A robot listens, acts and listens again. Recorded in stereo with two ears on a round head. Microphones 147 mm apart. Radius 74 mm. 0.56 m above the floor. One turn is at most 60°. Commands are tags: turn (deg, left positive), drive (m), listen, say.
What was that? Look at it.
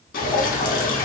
<turn deg="55"/>
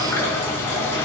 <turn deg="20"/>
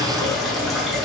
<say>Found it: dripping, straight ahead.</say>